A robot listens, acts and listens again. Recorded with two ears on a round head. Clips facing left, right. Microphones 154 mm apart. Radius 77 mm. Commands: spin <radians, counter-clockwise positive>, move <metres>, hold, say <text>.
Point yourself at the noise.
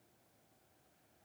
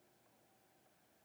hold
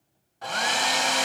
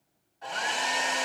spin 1.22
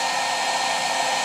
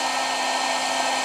say Found it: a hair dryer, straight ahead.